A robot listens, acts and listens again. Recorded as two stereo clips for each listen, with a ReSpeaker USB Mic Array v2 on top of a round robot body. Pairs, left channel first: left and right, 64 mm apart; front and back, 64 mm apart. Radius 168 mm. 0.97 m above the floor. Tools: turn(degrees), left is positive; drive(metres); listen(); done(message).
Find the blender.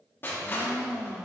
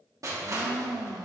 turn(degrees=-170)
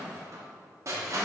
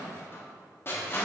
listen()
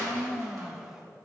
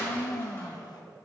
turn(degrees=-10)
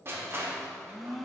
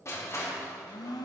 done("Found it: a blender, straight ahead, under 1 m away.")